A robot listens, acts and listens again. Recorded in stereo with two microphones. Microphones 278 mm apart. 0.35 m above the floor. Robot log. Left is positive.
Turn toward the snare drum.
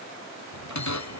cmd idle
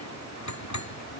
cmd idle
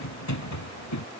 end: I can't make out a snare drum to turn to.